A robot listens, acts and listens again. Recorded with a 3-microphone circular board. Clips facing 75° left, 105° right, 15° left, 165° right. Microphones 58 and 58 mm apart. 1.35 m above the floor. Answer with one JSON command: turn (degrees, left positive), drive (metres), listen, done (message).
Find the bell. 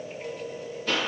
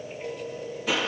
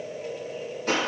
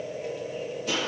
{"listen": true}
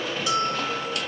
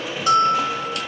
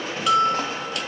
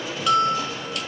{"turn": -75}
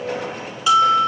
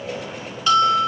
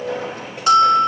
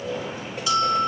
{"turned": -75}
{"done": "Facing the bell, 1 to 2 m away."}